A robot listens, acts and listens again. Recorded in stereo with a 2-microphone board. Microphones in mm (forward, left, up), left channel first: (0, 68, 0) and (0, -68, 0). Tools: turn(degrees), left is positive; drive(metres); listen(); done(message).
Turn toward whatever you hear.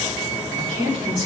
turn(degrees=-50)
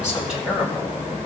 turn(degrees=-10)
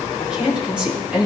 turn(degrees=-10)
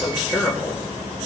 done("Found it: a woman speaking, straight ahead.")